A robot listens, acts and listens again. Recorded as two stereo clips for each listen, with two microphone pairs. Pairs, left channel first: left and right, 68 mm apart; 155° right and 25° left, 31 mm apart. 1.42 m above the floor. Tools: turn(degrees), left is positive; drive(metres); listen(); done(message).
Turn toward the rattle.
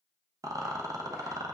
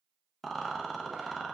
turn(degrees=-70)
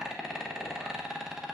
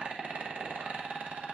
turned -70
turn(degrees=-10)
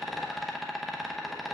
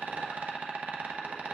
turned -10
done("Found it: a rattle, straight ahead, under 1 m away.")